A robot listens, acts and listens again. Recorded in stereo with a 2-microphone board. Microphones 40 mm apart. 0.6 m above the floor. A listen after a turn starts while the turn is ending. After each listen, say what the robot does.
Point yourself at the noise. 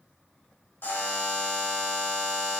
Turn 65° left.
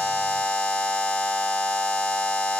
Turn 45° left.
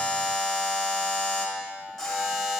Found it: a buzzer, straight ahead, 1 to 2 m away.